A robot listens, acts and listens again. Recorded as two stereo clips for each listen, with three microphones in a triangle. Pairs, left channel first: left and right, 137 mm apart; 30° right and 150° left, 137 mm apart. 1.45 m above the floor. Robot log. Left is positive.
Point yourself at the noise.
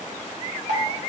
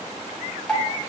note: The dripping: 110° right.
cmd yaw -110
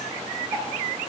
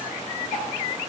cmd idle
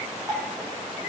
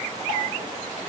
cmd idle
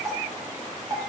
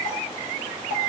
note: The dripping is now 25° right.
cmd yaw -25
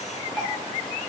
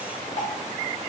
cmd idle
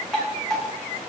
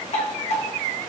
end: Facing the dripping, 1 to 2 m away.